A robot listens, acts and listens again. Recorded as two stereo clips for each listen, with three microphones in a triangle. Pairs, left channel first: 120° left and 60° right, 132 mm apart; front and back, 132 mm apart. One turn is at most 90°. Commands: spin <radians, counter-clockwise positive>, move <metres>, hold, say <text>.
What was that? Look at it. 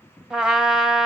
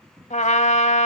spin 0.44
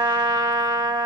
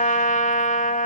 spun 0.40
say Facing the trumpet, 1 to 2 m away.